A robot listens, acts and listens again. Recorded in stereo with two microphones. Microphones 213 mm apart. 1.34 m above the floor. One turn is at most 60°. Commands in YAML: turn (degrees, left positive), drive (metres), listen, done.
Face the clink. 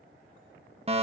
listen: true
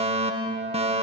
listen: true
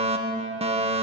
done: "I can't make out a clink to turn to."